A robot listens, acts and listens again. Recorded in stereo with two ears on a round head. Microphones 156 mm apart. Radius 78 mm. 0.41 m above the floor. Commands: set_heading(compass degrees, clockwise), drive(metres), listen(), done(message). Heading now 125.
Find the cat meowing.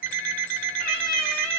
set_heading(75)
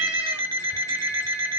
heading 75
listen()
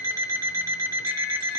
listen()
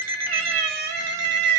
set_heading(140)
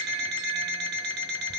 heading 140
listen()
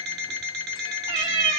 set_heading(165)
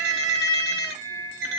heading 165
set_heading(180)
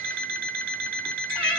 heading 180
listen()
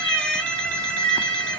done("Facing the cat meowing.")